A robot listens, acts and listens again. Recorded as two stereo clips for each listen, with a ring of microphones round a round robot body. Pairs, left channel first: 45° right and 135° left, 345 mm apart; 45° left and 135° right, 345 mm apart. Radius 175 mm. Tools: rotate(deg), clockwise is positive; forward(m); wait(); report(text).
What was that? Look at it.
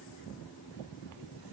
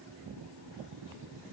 wait()
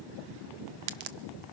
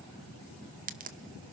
rotate(-155)
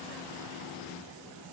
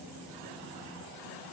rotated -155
report("Facing where the crack came from. I can't hear it now.")